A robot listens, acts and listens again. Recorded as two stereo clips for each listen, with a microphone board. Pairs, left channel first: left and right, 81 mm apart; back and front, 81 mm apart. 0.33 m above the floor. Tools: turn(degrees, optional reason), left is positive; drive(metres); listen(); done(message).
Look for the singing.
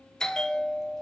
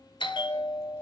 listen()
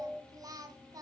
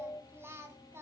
turn(degrees=-55, reason="The singing: 55° right.")
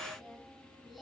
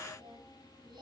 done("Facing the singing, 1 to 2 m away.")